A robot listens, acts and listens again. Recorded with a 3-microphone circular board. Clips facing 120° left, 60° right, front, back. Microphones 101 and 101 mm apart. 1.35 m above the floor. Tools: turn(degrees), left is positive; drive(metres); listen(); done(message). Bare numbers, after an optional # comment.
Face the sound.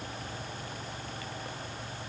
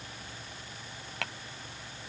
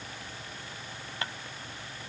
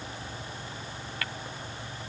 # The tapping: 65° right.
turn(-65)
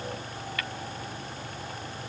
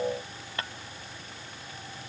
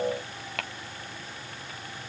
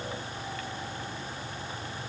done("Found it: tapping, straight ahead.")